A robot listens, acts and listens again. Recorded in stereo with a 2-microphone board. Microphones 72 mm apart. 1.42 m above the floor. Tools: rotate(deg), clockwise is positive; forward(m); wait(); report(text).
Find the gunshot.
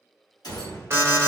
rotate(-65)
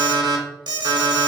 wait()
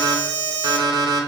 report("I heard a gunshot, but can't make it out now. It was about straight ahead or 50° left.")